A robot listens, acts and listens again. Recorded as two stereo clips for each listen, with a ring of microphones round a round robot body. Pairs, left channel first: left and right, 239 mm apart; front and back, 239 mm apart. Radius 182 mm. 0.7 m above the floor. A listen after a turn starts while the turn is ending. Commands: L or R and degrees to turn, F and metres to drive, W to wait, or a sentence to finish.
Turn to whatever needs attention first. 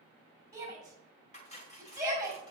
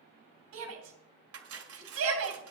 R170
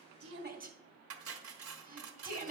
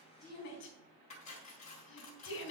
R40
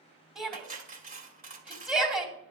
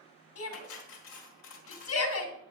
Found it: a shout, straight ahead.